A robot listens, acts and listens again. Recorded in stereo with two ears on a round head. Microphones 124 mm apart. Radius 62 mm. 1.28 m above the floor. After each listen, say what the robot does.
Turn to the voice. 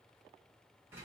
Keep listening.
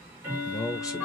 Turn 25° left.
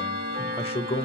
Turn 125° left.
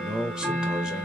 Facing the man speaking, under 1 m away.